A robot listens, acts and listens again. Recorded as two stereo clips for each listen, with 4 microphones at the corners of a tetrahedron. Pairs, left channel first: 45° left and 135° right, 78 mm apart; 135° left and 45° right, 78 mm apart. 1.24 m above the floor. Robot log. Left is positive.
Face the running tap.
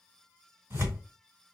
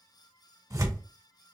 cmd idle
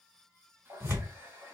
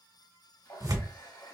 note: The running tap: 165° left.
cmd yaw +165
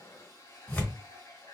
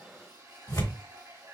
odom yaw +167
end: Facing the running tap, 1 to 2 m away.